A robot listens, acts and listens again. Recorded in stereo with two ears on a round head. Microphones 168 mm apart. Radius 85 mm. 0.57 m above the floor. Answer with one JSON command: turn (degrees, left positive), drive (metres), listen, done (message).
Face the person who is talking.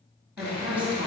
{"turn": -30}
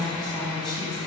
{"turn": 25}
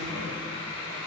{"listen": true}
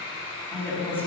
{"turn": 10}
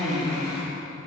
{"done": "Facing the woman speaking, over 4 m away."}